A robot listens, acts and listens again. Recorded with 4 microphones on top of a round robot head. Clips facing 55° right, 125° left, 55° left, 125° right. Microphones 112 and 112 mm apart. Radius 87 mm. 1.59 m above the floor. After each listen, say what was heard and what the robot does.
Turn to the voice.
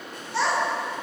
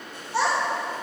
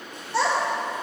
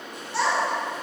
The child speaking: 50° left. Turn 50° left.
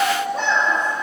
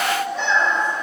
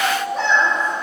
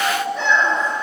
Found it: a child speaking, straight ahead, 1 to 2 m away.